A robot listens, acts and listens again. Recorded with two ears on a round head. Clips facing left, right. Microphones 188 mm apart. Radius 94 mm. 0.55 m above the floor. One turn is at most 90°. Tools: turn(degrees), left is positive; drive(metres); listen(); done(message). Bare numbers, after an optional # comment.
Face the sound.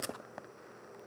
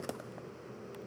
listen()
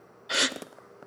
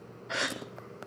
# The gasp: about 45° left or 135° left.
turn(45)
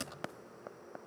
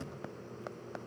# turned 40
listen()
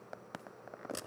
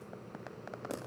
done("I heard a gasp, but can't make it out now. It was about 5° left or 95° left.")